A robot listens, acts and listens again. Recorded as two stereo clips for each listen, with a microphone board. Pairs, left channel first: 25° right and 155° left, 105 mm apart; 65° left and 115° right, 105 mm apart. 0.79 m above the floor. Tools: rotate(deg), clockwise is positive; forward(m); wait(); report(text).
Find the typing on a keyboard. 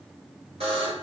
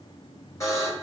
wait()
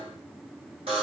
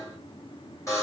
wait()
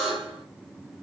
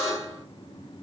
report("I can't make out typing on a keyboard to turn to.")